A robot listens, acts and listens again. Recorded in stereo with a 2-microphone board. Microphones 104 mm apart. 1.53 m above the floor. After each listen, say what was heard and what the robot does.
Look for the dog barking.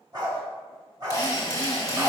The dog barking: about 40° right or 140° right. Turn 40° right.
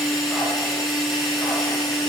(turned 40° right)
Keep listening.
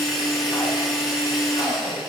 Keep listening.
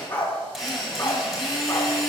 So it is at 20° left. Turn 20° left.
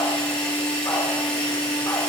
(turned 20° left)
Keep listening.
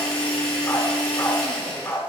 The dog barking is now 10° left. Turn 10° left.
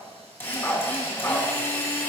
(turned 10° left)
Found it: a dog barking, straight ahead.